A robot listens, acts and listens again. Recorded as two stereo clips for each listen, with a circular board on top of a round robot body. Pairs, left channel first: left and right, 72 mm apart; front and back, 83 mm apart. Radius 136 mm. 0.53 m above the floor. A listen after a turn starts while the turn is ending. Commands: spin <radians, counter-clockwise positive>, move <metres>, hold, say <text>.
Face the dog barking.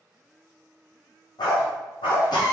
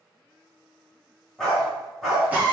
spin 1.57
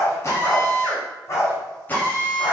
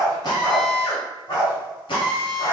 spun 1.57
spin 0.70
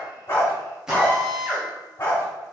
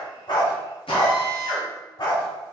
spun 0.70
spin 0.52
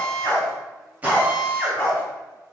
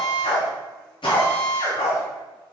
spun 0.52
spin 0.26
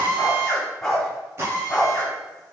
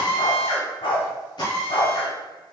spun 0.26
say Facing the dog barking, 1 to 2 m away.